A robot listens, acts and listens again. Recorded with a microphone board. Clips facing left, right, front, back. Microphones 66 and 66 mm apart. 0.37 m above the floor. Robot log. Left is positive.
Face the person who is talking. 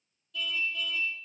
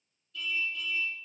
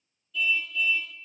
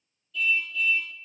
cmd idle
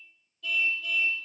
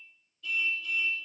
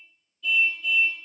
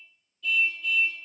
cmd idle
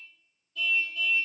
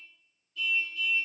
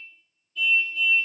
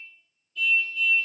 end: I can't make out anyone speaking to turn to.